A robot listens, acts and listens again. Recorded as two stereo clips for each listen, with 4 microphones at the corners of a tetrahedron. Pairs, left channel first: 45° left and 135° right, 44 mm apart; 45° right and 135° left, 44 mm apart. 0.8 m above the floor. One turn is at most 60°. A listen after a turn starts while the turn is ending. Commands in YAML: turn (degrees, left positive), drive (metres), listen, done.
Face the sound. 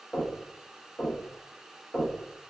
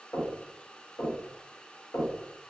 turn: -30
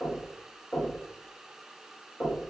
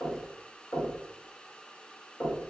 turn: -15
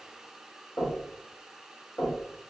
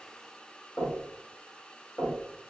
done: "Facing the knocking, 1 to 2 m away."